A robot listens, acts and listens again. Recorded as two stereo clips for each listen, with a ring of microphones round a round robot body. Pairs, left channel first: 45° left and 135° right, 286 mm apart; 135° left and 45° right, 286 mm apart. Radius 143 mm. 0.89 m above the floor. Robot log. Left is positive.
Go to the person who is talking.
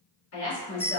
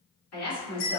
note: The woman speaking: 95° left.
cmd yaw +95
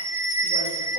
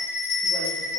cmd idle
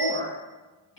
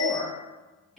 note: The woman speaking is now 45° left.
cmd yaw +45
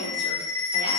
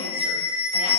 cmd idle
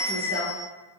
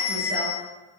cmd idle
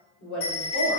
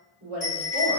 cmd fwd 1.0
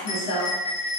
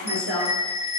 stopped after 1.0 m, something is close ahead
end: Arrived at the woman speaking, straight ahead.